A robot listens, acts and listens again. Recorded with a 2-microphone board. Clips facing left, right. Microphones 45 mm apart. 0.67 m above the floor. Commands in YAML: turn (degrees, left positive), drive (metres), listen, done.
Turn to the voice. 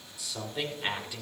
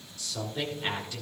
turn: 30
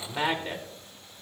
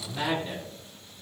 turn: 130
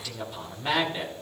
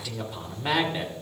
turn: -10
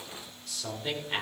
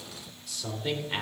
done: "Facing the man speaking."